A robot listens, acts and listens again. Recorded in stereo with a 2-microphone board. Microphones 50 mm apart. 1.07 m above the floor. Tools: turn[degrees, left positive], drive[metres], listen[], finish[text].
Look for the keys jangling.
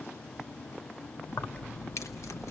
Thought: The keys jangling: about 70° left or 110° left.
Action: turn[70]
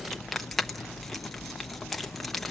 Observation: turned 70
Action: finish[Facing the keys jangling, under 1 m away.]